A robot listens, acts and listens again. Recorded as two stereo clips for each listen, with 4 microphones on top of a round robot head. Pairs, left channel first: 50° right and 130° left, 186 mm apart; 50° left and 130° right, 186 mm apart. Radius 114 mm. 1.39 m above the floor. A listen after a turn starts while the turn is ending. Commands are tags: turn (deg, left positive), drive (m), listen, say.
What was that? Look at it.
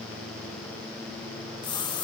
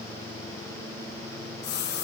<turn deg="15"/>
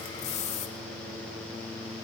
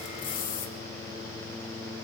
<say>Found it: a splash, straight ahead.</say>